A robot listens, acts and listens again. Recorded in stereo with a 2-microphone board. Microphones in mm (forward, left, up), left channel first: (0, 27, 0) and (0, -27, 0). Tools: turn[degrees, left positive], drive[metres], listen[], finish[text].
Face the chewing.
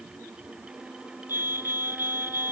Action: listen[]
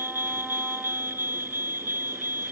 Action: listen[]
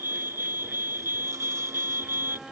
Action: finish[I can't make out chewing to turn to.]